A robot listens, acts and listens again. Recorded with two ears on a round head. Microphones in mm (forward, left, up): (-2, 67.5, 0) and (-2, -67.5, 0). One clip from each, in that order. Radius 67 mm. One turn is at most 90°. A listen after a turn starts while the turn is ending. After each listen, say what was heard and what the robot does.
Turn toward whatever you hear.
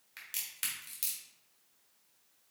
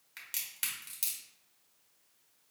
Turn 30° right.
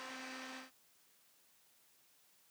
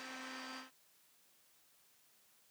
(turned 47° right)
Keep listening.
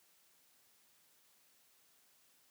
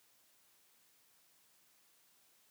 I heard a crack, but can't make it out now. It was about 40° left or 125° right.